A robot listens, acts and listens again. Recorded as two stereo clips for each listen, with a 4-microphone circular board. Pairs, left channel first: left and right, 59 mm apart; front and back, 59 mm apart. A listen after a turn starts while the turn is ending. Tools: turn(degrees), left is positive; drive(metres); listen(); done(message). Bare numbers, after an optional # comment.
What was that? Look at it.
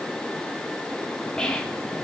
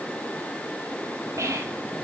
# The whispering: 165° left.
turn(165)
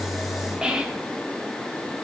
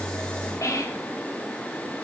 # The whispering is now 15° right.
turn(-15)
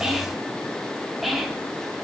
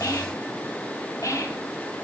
done("Found it: whispering, straight ahead, 1 to 2 m away.")